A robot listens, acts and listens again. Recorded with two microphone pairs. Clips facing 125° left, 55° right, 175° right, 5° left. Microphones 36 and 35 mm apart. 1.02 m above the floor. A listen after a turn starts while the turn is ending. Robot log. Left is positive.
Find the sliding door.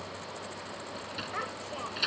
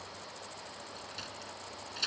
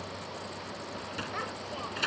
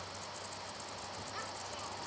note: The sliding door: 170° right.
cmd yaw -170
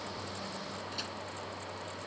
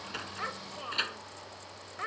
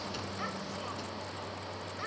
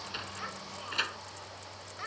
note: The sliding door is now 15° right.
cmd yaw -15
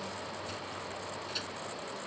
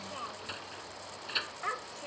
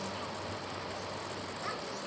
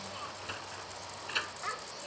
end: Found it: a sliding door, straight ahead.